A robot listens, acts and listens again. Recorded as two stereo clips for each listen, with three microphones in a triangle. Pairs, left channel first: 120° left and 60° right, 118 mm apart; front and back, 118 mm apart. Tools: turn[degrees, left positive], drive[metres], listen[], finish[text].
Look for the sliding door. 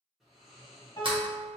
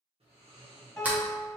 Thought: The sliding door: 105° right.
Action: turn[-105]
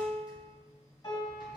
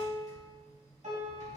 Action: listen[]
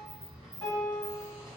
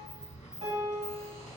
Thought: The sliding door is now 10° right.
Action: turn[-10]
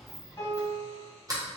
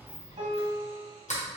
Action: finish[Found it: a sliding door, straight ahead.]